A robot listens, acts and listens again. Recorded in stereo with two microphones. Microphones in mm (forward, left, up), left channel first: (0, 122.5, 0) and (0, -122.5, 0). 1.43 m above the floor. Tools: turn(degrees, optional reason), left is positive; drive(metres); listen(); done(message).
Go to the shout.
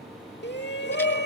turn(degrees=45, reason="The shout: about 45° left or 135° left.")
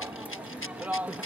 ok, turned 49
drive(metres=1.0)
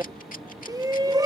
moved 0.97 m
turn(degrees=-15, reason="The shout is now 15° right.")
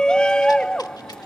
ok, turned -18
drive(metres=1.0)
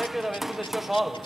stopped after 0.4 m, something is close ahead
done("I am next to the shout.")